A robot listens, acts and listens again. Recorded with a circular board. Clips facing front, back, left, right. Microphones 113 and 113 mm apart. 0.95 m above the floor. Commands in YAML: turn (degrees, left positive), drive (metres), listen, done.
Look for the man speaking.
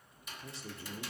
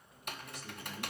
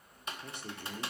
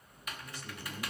turn: 55
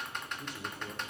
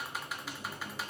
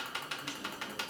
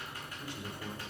listen: true
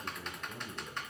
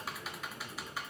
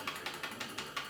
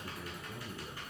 turn: -25
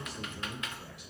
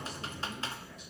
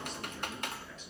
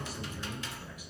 turn: -10
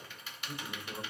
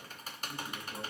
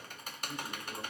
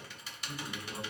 done: "Found it: a man speaking, straight ahead, 2 to 4 m away."